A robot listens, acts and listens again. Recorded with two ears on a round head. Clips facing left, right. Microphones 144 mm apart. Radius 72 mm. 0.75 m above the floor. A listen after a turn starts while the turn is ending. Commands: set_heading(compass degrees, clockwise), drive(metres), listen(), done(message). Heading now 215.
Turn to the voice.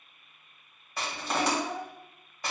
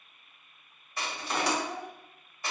set_heading(200)
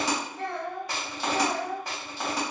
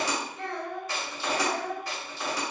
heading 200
done("Facing the child speaking.")